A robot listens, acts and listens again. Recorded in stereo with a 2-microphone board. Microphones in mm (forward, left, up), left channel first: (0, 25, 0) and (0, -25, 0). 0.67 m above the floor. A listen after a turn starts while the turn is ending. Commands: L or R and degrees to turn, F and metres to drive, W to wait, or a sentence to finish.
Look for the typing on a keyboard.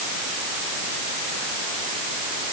W
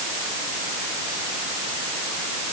W
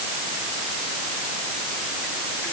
I can't make out typing on a keyboard to turn to.